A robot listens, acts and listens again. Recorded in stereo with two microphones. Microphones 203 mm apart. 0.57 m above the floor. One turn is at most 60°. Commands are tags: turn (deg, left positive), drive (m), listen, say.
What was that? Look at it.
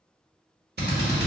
<turn deg="-55"/>
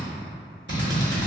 <turn deg="-60"/>
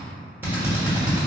<turn deg="-10"/>
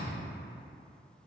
<listen/>
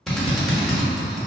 <say>Facing the drill.</say>